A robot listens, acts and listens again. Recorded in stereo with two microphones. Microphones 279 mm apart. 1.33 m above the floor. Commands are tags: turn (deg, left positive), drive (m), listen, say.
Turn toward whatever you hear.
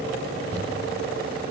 <turn deg="-60"/>
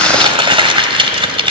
<turn deg="-20"/>
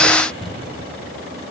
<say>Found it: crumpling, straight ahead.</say>